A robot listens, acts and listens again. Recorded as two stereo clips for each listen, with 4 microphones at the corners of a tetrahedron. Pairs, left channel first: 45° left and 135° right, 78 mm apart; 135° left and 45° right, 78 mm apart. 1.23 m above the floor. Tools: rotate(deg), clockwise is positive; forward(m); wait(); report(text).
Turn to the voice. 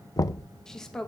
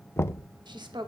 rotate(40)
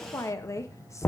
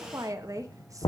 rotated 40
report("Found it: a woman speaking, straight ahead, 1 to 2 m away.")